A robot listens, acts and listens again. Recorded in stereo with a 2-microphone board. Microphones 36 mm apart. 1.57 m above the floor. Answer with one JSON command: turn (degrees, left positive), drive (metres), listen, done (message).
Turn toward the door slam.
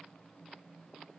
{"listen": true}
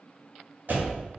{"turn": -65}
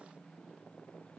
{"listen": true}
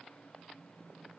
{"done": "I heard a door slam, but can't make it out now. It was about straight ahead or 50° right."}